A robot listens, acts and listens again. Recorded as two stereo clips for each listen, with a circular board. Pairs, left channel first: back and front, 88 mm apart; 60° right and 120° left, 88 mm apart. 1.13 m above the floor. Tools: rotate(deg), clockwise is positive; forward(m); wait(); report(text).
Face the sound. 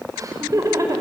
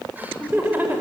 rotate(-50)
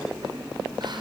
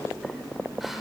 wait()
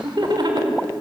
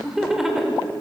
rotate(-35)
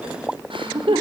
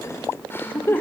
report("Found it: laughter, straight ahead, 2 to 4 m away.")